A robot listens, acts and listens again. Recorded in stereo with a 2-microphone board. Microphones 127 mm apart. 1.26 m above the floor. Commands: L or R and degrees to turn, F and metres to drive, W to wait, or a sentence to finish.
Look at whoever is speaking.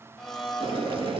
W
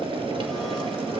W
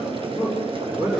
R15
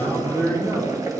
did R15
R145
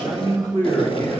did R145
L15
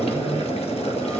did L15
W
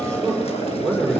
Found it: a man speaking, straight ahead.